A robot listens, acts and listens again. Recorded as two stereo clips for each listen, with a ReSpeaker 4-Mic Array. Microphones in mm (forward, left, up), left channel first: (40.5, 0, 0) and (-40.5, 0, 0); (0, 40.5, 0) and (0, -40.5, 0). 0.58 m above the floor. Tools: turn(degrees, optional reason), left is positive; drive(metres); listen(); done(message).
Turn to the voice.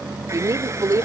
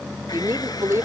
turn(degrees=-140, reason="The woman speaking: 140° right.")
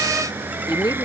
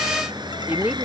turn(degrees=-20, reason="The woman speaking is now 20° right.")
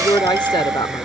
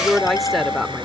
done("Facing the woman speaking.")